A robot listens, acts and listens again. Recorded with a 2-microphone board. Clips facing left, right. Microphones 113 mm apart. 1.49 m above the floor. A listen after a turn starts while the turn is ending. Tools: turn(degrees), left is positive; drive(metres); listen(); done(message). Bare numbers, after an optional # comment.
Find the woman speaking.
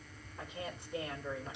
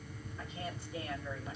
# The woman speaking: about 60° left or 120° left.
turn(60)
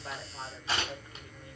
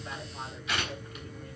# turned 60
done("Facing the woman speaking, over 4 m away.")